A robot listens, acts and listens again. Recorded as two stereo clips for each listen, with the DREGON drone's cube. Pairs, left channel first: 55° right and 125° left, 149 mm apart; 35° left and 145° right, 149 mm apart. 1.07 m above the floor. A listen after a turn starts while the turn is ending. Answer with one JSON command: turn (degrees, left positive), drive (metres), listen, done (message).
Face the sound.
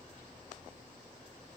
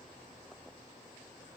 {"listen": true}
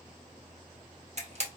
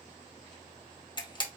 {"turn": 90}
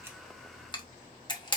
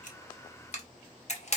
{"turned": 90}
{"done": "Found it: a camera shutter, straight ahead."}